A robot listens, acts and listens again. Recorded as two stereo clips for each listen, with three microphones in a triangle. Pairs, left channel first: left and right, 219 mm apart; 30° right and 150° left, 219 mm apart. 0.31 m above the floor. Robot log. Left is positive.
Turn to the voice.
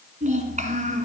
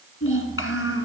note: The child speaking: 35° right.
cmd yaw -35
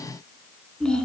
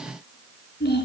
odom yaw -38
end: Facing the child speaking.